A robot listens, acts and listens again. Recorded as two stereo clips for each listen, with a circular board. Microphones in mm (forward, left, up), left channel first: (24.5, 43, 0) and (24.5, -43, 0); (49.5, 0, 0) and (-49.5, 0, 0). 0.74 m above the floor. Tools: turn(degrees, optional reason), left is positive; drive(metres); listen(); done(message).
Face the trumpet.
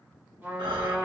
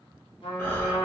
turn(degrees=-20, reason="The trumpet: 20° right.")
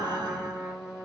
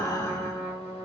done("Facing the trumpet, 1 to 2 m away.")